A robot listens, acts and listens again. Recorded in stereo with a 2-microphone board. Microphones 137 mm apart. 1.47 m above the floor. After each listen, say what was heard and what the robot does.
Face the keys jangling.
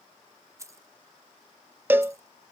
The keys jangling: about 20° right or 160° right. Turn 20° right.
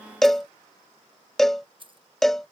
So it is at 135° right. Turn 135° right.
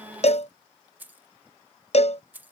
The keys jangling is now 15° right. Turn 15° right.
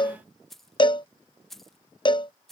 Found it: keys jangling, straight ahead.